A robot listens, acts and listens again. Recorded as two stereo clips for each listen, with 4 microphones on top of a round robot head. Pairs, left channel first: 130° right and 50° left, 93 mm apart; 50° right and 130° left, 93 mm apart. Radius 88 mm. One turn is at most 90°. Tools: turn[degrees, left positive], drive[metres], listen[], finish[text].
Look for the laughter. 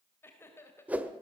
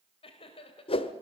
Thought: The laughter: 65° right.
Action: turn[-65]
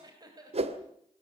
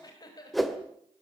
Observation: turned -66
Action: finish[Facing the laughter.]